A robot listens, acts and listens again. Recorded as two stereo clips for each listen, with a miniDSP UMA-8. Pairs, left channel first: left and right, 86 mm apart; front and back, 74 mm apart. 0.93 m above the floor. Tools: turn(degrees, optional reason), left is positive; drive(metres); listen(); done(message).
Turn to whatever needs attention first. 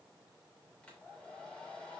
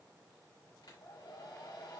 listen()
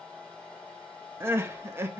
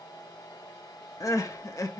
turn(degrees=-35, reason="The crying: 35° right.")
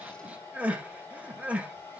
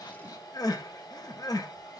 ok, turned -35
turn(degrees=-20, reason="The crying is now 20° right.")
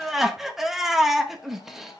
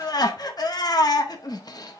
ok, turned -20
done("Facing the crying.")